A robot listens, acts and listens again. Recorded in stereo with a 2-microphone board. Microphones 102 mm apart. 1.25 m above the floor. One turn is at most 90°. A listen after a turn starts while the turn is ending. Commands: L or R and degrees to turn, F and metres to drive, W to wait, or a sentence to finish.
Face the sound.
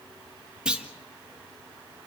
R30
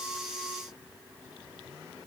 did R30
W
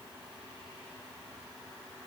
I heard a clunk, but can't make it out now. It was about 20° left or 140° right.